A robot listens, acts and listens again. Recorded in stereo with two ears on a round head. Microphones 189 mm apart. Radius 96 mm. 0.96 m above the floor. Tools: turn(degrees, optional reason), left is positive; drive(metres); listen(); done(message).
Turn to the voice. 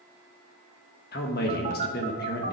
turn(degrees=45, reason="The man speaking: about 45° left or 135° left.")
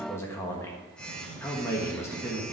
turn(degrees=15, reason="So it is at 15° left.")
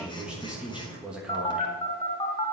done("Facing the man speaking.")